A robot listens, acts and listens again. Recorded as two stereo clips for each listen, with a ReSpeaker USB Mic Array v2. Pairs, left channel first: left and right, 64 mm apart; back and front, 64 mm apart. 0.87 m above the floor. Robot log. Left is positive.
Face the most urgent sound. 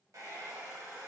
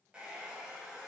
cmd idle
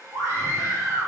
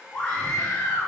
note: The scream: 125° right.
cmd yaw -125
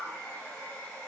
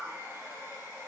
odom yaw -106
note: Nothing new. It was at 20° right.
cmd yaw -20
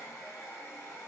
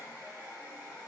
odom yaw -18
cmd idle
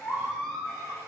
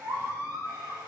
end: Facing the scream, 1 to 2 m away.